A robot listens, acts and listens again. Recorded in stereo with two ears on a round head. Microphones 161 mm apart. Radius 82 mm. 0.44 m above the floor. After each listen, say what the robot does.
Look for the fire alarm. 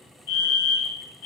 Turn 55° left.
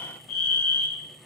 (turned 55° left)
Turn 45° left.
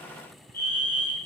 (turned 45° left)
Turn 15° left.
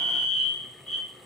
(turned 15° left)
Found it: a fire alarm, straight ahead, 2 to 4 m away.